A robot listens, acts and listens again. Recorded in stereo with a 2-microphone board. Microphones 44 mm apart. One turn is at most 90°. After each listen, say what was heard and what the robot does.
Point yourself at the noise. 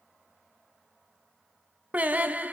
The singing: about 35° right or 145° right. Turn 35° right.
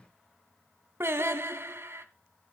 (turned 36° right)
So it is at 115° right. Turn 90° right.
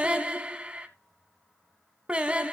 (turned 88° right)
The singing is now 25° right. Turn 25° right.
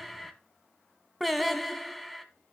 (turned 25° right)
Found it: singing, straight ahead.